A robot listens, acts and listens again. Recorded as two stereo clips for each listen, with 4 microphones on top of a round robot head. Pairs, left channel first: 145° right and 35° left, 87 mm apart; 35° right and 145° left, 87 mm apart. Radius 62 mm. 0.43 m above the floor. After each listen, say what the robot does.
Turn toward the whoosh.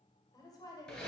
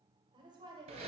Keep listening.
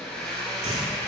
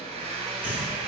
Turn 70° left.
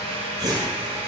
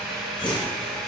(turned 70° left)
Turn 10° right.
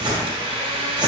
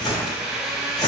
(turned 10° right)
Facing the whoosh, 2 to 4 m away.